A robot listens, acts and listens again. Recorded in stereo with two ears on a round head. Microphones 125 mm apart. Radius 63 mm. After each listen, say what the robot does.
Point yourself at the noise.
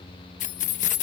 Turn 60° left.
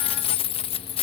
Turn 45° left.
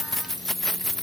Facing the keys jangling.